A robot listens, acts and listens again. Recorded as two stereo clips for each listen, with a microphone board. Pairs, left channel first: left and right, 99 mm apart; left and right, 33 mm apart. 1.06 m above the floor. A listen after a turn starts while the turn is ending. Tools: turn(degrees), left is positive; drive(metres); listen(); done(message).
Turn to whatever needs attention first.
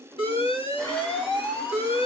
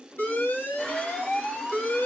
turn(degrees=75)
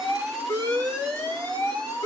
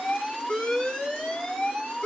turn(degrees=15)
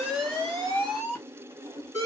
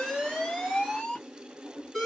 done("Facing the alarm, 1 to 2 m away.")